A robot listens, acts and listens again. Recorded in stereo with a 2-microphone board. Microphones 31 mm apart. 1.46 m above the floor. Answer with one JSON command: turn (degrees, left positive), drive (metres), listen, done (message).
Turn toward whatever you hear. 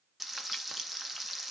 {"turn": -30}
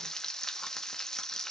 {"turn": 25}
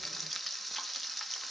{"done": "Found it: frying, straight ahead."}